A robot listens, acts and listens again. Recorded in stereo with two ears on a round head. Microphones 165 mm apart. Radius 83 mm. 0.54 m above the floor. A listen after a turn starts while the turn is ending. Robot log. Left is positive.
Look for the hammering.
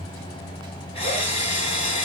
cmd idle
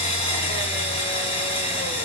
cmd idle
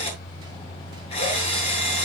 end: I can't make out hammering to turn to.